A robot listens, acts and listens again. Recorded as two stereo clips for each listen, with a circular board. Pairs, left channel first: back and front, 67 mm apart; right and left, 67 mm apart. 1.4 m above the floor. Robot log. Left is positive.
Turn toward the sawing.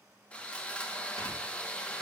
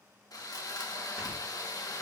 note: The sawing: 110° right.
cmd yaw -110
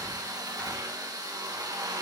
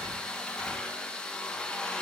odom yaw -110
note: The sawing is now 15° right.
cmd yaw -15
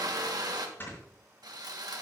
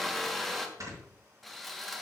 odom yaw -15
end: Facing the sawing, 1 to 2 m away.